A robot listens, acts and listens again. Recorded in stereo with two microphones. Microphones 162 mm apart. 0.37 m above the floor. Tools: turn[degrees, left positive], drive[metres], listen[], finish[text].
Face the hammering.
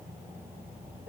Action: listen[]
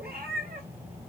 Action: listen[]
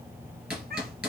Action: turn[-30]
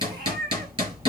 Thought: So it is at 140° right.
Action: turn[-140]
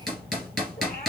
Action: finish[Facing the hammering.]